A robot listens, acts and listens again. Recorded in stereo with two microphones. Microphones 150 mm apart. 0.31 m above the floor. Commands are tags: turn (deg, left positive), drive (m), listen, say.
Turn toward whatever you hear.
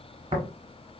<turn deg="-40"/>
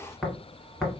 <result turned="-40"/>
<say>Found it: tapping, straight ahead, 1 to 2 m away.</say>